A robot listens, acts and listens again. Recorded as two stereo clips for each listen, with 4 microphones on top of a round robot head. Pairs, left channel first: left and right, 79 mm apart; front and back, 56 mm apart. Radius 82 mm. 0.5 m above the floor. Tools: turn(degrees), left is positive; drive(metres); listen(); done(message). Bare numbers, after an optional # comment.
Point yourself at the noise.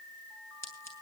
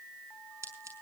# The scissors: 145° left.
turn(145)
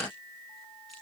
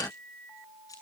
listen()
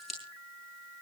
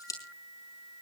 done("Found it: scissors, straight ahead.")